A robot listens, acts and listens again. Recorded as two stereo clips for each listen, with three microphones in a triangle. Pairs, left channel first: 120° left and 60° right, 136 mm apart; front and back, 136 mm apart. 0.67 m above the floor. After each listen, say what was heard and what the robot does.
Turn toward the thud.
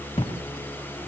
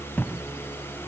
The thud: 80° left. Turn 80° left.
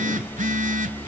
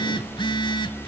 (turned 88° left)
Nothing new. It was at 10° right. Turn 10° right.
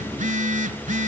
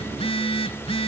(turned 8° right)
I heard a thud from this way, but can't make it out now.